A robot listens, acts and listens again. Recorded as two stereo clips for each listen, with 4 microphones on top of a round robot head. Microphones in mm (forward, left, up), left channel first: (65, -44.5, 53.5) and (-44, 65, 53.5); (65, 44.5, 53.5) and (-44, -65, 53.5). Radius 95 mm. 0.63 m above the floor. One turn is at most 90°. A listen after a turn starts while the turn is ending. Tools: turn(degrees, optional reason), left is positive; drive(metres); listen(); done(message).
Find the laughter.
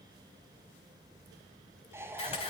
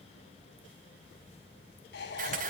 turn(degrees=60, reason="The laughter: 60° left.")
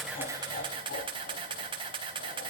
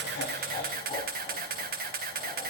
turn(degrees=-15, reason="The laughter is now 15° right.")
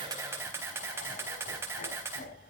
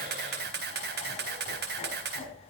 turn(degrees=-10, reason="The laughter is now 10° right.")
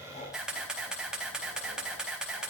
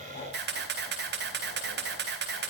listen()
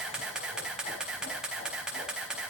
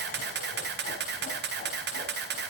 listen()
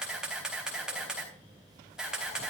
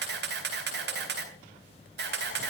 done("Facing where the laughter came from. I can't hear it now.")